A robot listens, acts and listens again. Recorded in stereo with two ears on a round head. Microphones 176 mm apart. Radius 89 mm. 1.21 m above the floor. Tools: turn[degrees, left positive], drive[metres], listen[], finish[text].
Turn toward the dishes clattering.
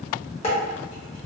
Thought: The dishes clattering: about 30° left or 150° left.
Action: turn[30]
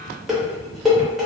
Action: finish[Facing the dishes clattering.]